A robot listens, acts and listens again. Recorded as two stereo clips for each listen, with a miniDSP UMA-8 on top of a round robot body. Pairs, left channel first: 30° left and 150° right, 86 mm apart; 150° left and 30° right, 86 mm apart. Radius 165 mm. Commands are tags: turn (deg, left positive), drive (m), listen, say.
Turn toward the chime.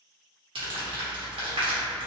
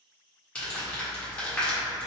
<listen/>
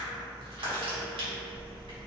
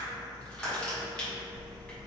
<listen/>
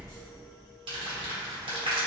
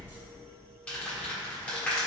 <say>I can't make out a chime to turn to.</say>